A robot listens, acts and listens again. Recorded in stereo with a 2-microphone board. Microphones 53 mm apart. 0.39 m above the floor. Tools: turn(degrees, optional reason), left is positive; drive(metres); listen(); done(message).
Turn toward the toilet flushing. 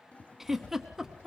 turn(degrees=25, reason="The toilet flushing: about 25° left or 155° left.")
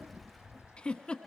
listen()
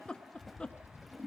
done("Facing the toilet flushing.")